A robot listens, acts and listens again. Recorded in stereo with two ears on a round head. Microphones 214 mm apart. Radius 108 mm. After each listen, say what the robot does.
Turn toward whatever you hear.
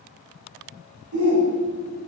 Turn 65° right.
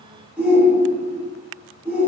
Facing the shout.